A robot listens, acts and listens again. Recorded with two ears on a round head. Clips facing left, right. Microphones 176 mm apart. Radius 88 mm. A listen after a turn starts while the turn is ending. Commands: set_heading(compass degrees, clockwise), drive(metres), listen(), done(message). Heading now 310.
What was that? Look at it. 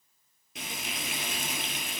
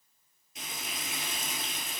set_heading(255)
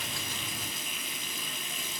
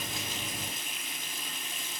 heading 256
set_heading(186)
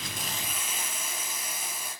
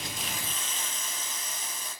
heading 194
set_heading(184)
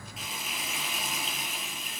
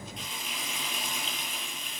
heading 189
done("Facing the frying, over 4 m away.")